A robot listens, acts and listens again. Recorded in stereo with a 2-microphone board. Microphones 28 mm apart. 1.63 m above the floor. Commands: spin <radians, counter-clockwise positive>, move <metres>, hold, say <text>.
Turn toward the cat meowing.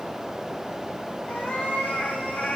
spin 1.22
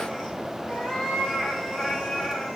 spin 0.17
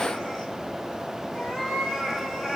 say Found it: a cat meowing, straight ahead, over 4 m away.